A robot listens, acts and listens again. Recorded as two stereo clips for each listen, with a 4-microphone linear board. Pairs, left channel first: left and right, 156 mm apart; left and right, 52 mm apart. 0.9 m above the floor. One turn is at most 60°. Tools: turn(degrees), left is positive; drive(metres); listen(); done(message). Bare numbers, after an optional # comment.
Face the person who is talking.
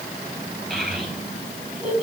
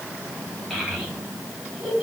turn(-30)
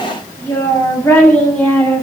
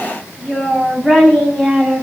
# So it is at 10° left.
turn(10)
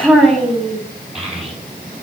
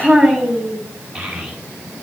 done("Facing the child speaking, over 4 m away.")